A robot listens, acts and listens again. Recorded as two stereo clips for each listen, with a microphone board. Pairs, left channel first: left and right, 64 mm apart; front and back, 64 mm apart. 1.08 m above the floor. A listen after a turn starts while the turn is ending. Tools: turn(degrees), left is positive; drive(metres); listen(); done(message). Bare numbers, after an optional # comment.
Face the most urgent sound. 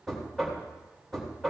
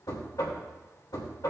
listen()
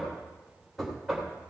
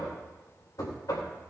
listen()
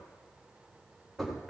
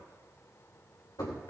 done("I can't make out anything urgent, only knocking.")